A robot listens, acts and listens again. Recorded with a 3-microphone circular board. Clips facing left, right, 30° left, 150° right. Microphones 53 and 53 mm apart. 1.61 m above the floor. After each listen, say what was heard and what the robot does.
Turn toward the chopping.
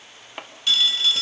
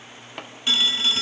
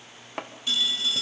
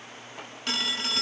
The chopping: 10° left. Turn 10° left.
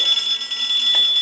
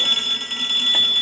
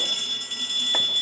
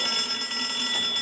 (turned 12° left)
Keep listening.
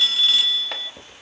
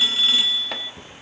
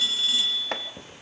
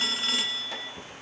Facing the chopping.